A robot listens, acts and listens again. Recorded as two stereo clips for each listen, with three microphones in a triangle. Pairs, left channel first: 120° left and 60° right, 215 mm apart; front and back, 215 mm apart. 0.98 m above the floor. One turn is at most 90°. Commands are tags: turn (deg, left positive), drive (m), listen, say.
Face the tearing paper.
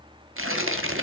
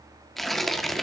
<turn deg="-90"/>
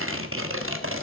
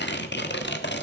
<turn deg="-35"/>
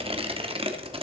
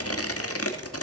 <say>Found it: tearing paper, straight ahead, 1 to 2 m away.</say>